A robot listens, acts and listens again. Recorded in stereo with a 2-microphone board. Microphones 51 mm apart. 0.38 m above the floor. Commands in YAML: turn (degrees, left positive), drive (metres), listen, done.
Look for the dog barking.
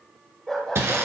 turn: 30
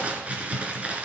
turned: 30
listen: true
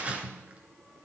listen: true
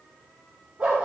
turn: -40
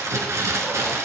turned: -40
listen: true
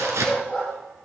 done: "Facing the dog barking, over 4 m away."